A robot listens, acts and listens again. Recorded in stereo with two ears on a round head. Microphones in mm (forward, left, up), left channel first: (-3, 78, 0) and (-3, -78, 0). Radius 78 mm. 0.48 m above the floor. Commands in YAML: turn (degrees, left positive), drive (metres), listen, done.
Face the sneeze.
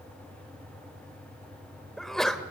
turn: 30
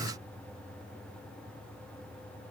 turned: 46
listen: true
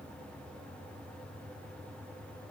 done: "I heard a sneeze, but can't make it out now. It was about 45° right or 130° left."